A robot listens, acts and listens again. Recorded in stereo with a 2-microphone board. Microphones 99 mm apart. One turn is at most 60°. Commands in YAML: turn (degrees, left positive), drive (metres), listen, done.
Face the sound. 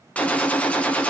turn: 30
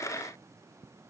listen: true
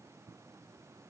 done: "I heard a gunshot, but can't make it out now. It was about 20° right or 140° left."